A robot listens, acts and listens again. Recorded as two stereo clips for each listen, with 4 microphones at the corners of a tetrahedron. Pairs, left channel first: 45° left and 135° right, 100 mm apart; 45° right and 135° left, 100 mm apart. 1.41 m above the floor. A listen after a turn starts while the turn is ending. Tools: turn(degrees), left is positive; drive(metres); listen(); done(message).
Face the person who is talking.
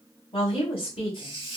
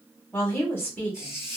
turn(degrees=25)
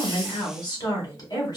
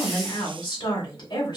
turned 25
done("Facing the woman speaking, 1 to 2 m away.")